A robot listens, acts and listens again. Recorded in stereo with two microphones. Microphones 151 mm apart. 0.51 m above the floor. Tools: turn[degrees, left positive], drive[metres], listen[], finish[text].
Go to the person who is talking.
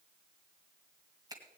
Action: listen[]
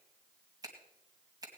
Action: listen[]
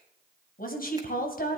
Thought: The woman speaking: about 70° left or 110° left.
Action: turn[70]
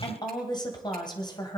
Thought: So it is at 30° left.
Action: turn[30]
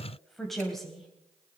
Action: drive[1.0]
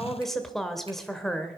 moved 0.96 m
Action: drive[1.0]
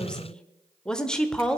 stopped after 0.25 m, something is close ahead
Action: finish[I am next to the woman speaking.]